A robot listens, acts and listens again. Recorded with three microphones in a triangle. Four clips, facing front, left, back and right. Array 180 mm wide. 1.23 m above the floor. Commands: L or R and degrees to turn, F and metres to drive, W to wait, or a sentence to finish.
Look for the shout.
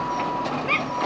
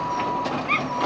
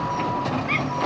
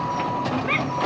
R50
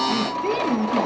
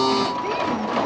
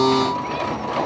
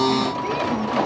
W
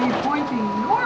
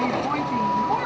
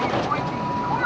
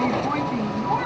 Found it: a shout, straight ahead.